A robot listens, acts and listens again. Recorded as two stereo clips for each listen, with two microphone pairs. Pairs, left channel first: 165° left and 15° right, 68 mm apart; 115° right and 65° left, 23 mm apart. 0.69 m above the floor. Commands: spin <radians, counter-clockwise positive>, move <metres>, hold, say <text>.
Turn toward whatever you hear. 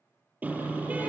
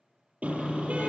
spin 0.87
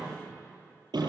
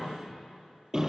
say Facing the car horn.